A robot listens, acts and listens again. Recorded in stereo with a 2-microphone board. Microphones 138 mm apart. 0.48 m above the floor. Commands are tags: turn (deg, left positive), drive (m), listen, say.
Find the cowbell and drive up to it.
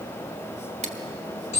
<listen/>
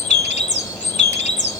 <listen/>
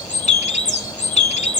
<say>I can't make out a cowbell, only a bird.</say>